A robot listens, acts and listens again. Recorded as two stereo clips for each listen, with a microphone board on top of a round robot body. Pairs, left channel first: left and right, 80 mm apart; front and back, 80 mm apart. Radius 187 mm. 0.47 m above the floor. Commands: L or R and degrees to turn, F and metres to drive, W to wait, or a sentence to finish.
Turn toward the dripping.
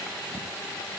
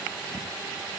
W
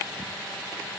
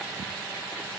W
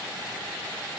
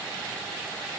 I can't make out dripping.